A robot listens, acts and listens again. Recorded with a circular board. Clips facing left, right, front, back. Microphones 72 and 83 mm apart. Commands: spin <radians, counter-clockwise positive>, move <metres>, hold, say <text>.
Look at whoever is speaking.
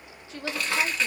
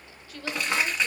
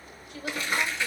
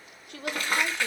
spin 2.71
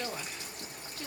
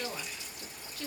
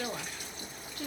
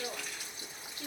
spin 0.44
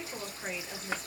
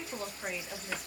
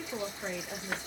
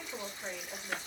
say Found it: a woman speaking, straight ahead.